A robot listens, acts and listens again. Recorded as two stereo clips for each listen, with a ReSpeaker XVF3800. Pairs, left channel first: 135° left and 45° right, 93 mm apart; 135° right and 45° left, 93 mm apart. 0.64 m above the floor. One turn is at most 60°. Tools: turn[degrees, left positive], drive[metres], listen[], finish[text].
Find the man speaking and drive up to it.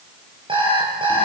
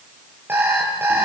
Action: listen[]
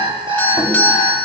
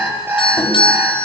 Action: listen[]
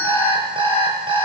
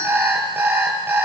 Action: finish[I can't make out a man speaking, only an alarm clock and a doorbell.]